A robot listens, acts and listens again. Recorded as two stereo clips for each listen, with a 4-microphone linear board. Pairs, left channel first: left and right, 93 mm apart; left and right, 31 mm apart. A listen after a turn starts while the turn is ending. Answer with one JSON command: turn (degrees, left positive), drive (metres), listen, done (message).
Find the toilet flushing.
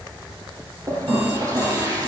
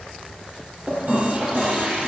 {"turn": -35}
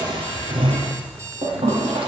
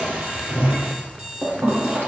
{"turn": -105}
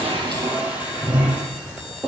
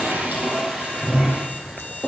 {"turn": -15}
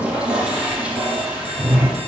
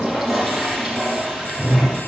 {"turn": -10}
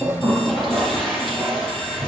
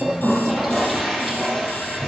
{"done": "Found it: a toilet flushing, straight ahead."}